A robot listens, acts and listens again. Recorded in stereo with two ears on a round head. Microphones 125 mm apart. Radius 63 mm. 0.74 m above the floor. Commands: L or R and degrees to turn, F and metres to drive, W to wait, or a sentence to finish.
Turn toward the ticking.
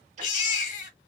R55
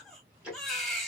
R10
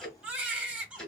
Found it: ticking, straight ahead.